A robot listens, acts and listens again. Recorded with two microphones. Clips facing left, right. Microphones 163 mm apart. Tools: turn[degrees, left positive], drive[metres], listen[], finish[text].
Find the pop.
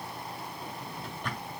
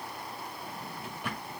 Action: listen[]
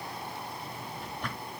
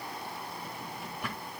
Action: listen[]
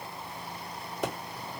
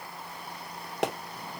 Thought: The pop: about 75° right or 105° right.
Action: turn[-75]
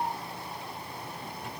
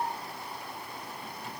Action: listen[]
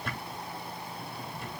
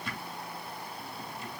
Action: finish[I heard a pop, but can't make it out now. It was about straight ahead or 30° right.]